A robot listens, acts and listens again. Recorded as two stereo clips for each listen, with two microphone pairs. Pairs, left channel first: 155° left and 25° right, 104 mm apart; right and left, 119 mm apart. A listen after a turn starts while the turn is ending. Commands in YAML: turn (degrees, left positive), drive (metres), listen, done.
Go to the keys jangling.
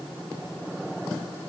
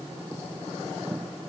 listen: true
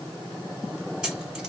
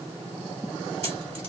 turn: 60
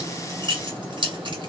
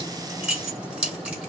turn: 10
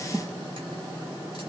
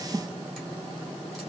listen: true
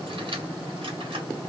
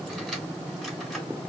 drive: 1.0
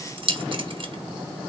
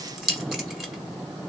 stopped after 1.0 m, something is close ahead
done: "Arrived at the keys jangling, straight ahead."